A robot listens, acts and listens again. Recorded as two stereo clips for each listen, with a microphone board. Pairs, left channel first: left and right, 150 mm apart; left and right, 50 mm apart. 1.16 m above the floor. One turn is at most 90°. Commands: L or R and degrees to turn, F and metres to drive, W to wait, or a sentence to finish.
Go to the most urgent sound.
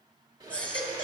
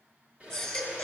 L30
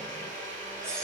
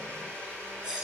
R20
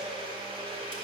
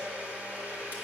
W
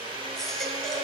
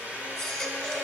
W
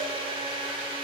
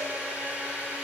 I heard a baby crying from this way, but can't make it out now. I did not reach it.